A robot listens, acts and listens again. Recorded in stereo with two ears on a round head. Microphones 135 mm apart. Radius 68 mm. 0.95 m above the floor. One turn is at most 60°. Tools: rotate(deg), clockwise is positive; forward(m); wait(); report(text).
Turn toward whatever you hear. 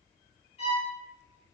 rotate(-45)
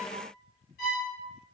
rotate(-60)
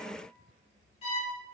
rotate(-45)
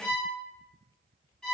report("Facing the violin.")